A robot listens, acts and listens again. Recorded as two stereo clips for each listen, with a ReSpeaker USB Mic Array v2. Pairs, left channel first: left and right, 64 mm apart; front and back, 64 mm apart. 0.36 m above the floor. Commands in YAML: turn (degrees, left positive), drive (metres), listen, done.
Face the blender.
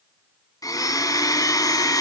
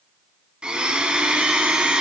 turn: 105
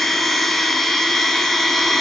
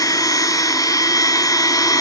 done: "Found it: a blender, straight ahead."